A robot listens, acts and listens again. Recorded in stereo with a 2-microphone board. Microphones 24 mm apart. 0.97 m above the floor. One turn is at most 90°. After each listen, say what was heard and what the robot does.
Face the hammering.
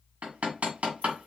Turn 90° right.
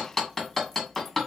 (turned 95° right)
Facing the hammering.